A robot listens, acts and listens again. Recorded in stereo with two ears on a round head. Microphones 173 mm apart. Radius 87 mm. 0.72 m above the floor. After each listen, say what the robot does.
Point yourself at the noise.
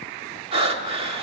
Turn 30° right.
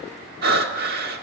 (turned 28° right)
Turn 120° right.
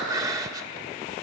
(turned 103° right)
Turn 20° right.
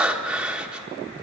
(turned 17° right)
Facing the breathing, 1 to 2 m away.